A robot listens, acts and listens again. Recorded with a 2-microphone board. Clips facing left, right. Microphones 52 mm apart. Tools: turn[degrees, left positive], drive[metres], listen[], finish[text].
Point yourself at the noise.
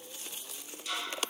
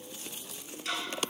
Thought: The ticking: about 70° right or 110° right.
Action: turn[-70]
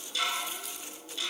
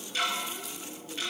Thought: So it is at 35° right.
Action: turn[-35]
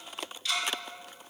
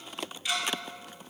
Thought: The ticking is now 20° right.
Action: turn[-20]
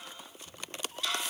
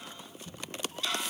Action: finish[Found it: ticking, straight ahead, 1 to 2 m away.]